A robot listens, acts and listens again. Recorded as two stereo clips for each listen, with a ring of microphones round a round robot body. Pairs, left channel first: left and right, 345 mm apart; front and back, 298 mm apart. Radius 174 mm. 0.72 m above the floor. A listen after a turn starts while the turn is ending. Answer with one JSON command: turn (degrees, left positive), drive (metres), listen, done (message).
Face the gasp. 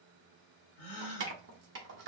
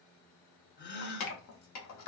{"turn": 60}
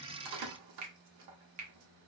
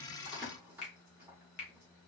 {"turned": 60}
{"done": "I heard a gasp from this way, but can't make it out now."}